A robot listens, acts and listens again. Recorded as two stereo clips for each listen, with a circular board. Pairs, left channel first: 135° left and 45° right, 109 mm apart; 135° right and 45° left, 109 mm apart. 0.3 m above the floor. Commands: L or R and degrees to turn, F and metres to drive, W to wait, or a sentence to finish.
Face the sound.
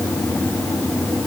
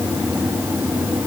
W
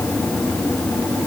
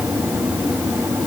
W
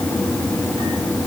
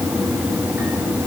I can't make out anything.